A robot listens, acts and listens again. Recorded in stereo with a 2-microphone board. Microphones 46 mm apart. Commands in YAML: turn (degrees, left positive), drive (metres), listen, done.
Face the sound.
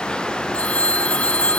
turn: 30
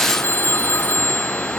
turn: 120
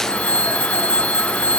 turn: 30
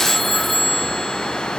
done: "Found it: a phone ringing, straight ahead."